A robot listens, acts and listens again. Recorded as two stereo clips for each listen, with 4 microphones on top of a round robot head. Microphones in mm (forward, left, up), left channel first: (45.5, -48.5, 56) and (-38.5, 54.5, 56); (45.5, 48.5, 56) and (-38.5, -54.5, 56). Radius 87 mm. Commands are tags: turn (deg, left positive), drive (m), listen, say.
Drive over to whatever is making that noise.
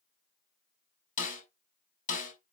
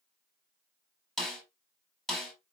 <turn deg="-35"/>
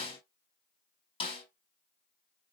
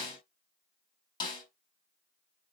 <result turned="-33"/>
<drive m="1.0"/>
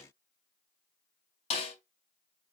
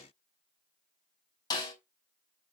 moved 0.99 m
<turn deg="-10"/>
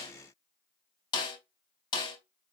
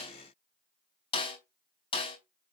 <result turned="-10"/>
<drive m="1.0"/>
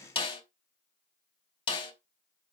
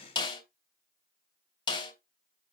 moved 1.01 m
<drive m="1.0"/>
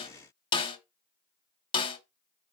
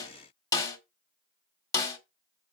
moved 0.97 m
<drive m="1.0"/>
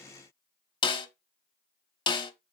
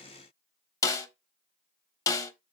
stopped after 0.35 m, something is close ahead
<turn deg="-10"/>
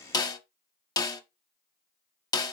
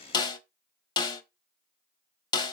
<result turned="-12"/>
<say>I am next to the snare drum.</say>